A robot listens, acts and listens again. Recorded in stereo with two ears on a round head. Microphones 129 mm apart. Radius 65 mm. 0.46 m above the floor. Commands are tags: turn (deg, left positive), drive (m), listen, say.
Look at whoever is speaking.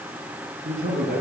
<turn deg="-55"/>
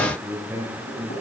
<turn deg="-10"/>
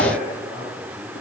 <say>Found it: a man speaking, straight ahead, over 4 m away.</say>